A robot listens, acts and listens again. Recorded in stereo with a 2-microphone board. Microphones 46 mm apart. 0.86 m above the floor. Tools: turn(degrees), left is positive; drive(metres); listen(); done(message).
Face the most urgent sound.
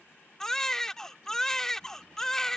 turn(degrees=30)
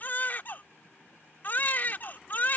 turn(degrees=135)
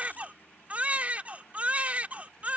turn(degrees=-35)
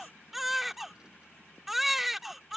done("Found it: a baby crying, straight ahead.")